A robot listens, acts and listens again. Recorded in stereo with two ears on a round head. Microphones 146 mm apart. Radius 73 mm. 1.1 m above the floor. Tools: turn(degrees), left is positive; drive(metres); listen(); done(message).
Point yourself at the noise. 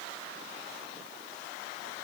listen()
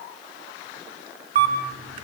turn(degrees=-50)
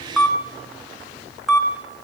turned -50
done("Facing the camera shutter, 2 to 4 m away.")